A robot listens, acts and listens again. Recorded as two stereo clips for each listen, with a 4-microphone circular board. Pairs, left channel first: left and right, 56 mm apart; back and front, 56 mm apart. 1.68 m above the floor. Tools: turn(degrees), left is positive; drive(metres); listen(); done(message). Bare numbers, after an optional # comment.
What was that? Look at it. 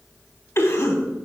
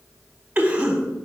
# The cough: 65° left.
turn(65)
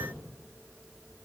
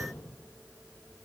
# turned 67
listen()
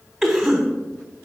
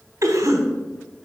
done("Facing the cough, 1 to 2 m away.")